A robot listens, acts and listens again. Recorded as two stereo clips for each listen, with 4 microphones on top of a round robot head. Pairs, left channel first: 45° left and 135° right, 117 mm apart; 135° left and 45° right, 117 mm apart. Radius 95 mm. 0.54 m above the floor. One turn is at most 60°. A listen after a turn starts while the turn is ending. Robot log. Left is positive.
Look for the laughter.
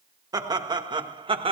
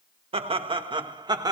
note: The laughter: 100° right.
cmd yaw -60
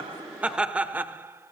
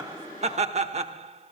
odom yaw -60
note: The laughter is now 65° right.
cmd yaw -60
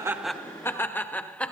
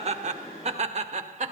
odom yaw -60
note: The laughter is now 35° right.
cmd yaw -35
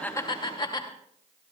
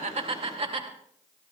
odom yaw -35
note: The laughter is now 10° right.
cmd yaw -10
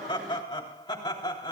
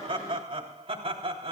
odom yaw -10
end: Facing the laughter.